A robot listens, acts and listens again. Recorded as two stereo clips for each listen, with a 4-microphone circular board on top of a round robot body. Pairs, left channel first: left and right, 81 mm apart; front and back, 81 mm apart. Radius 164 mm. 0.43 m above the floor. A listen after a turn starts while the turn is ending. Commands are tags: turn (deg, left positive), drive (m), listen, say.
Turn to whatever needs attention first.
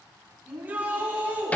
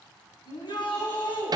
<turn deg="-20"/>
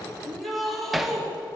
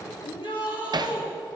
<say>Facing the shout.</say>